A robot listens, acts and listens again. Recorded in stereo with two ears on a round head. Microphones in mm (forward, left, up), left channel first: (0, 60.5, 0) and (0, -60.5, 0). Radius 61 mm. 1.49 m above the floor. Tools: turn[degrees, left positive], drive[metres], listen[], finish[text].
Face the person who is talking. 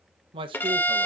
Thought: The man speaking: about 40° right or 140° right.
Action: turn[-40]
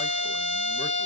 Action: listen[]
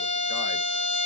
Action: listen[]
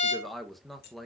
Action: finish[Found it: a man speaking, straight ahead, 1 to 2 m away.]